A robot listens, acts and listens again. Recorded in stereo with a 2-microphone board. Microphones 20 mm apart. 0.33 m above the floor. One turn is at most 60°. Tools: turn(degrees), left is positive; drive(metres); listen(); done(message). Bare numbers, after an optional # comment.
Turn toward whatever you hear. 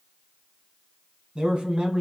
# The man speaking: about 45° right or 135° right.
turn(-45)
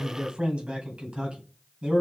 # So it is at 110° right.
turn(-60)
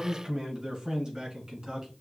# The man speaking is now 50° right.
turn(-50)
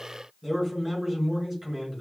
# The man speaking is now 20° right.
turn(-20)
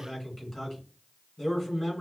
done("Found it: a man speaking, straight ahead.")